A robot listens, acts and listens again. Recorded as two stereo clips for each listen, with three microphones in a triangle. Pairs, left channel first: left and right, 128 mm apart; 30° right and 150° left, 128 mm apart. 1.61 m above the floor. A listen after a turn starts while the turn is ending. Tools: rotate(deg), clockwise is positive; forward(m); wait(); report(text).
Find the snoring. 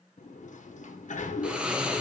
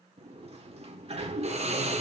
rotate(170)
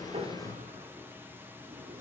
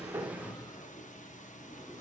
rotate(15)
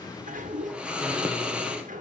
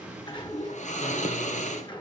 report("Found it: snoring, straight ahead.")